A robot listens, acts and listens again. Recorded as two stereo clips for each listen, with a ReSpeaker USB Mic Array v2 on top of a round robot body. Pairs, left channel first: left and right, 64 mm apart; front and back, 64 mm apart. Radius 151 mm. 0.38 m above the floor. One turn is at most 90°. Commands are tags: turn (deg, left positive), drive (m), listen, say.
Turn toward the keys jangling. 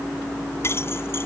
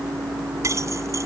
<turn deg="90"/>
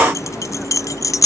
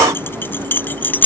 <turn deg="60"/>
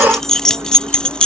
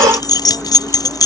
<turn deg="15"/>
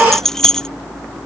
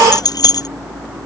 <turn deg="10"/>
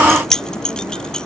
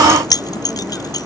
<turn deg="10"/>
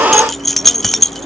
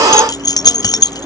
<say>Found it: keys jangling, straight ahead.</say>